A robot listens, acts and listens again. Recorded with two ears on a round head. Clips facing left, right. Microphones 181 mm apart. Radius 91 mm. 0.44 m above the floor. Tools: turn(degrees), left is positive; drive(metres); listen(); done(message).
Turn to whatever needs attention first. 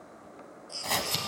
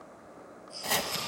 turn(degrees=55)
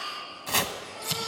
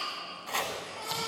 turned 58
listen()
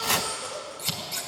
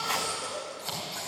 done("Facing the baby crying, over 4 m away.")